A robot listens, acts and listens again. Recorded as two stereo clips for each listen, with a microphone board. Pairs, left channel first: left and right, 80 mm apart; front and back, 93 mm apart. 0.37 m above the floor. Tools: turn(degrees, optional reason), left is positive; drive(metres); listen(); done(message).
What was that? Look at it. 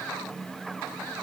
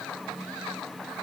listen()
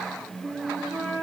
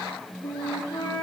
turn(degrees=-25, reason="The flute: 25° right.")
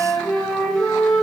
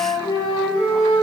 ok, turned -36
turn(degrees=10, reason="The flute is now 10° left.")
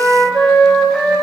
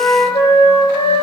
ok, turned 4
done("Facing the flute.")